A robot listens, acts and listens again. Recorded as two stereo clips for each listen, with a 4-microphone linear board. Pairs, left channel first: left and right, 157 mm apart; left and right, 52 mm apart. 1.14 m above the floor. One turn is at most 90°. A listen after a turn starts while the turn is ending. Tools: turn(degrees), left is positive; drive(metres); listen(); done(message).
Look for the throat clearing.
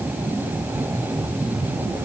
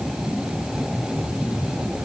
listen()
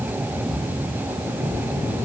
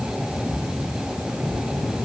listen()
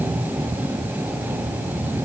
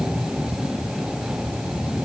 done("I can't make out throat clearing to turn to.")